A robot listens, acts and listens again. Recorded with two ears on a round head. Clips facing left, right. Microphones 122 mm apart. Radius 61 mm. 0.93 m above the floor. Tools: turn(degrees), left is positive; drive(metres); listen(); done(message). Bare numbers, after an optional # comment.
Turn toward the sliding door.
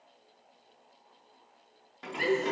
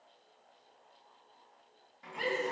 turn(90)
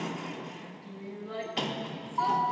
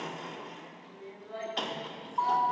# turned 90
done("Facing the sliding door.")